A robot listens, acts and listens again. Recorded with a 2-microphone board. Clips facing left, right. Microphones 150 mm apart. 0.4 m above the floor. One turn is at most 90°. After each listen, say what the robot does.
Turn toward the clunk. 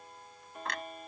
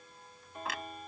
Turn 30° right.
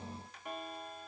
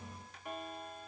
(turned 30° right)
Keep listening.
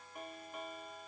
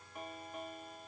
I heard a clunk, but can't make it out now. It was about 25° left or 145° right.